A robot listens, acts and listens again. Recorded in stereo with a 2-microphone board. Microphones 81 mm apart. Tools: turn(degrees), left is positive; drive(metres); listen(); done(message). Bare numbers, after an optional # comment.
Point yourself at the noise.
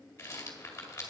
# The rattle: about 35° left or 145° left.
turn(35)
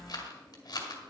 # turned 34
# So it is at 110° left.
turn(110)
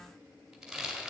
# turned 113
done("Facing the rattle, 2 to 4 m away.")